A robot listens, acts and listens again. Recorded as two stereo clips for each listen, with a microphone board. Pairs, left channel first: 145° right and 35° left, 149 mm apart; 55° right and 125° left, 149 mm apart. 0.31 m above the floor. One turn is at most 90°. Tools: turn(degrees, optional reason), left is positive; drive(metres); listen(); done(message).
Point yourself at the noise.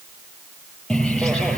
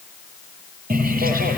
turn(degrees=90, reason="The bird: 130° left.")
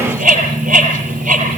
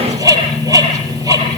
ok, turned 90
turn(degrees=60, reason="The bird is now 60° left.")
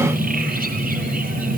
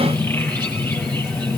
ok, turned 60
turn(degrees=20, reason="The bird is now 20° left.")
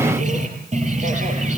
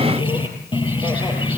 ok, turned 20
done("Found it: a bird, straight ahead.")